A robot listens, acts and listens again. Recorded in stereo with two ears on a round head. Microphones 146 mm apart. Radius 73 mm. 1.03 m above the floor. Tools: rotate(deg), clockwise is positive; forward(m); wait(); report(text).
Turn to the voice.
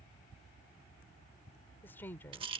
rotate(-30)
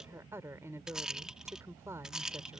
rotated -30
rotate(15)
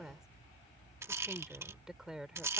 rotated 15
report("Facing the woman speaking.")